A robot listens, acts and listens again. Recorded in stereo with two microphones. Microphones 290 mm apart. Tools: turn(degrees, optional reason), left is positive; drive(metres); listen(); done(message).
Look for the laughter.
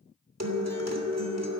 listen()
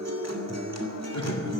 turn(degrees=65, reason="The laughter: about 65° left or 115° left.")
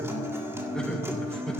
done("Facing the laughter, 2 to 4 m away.")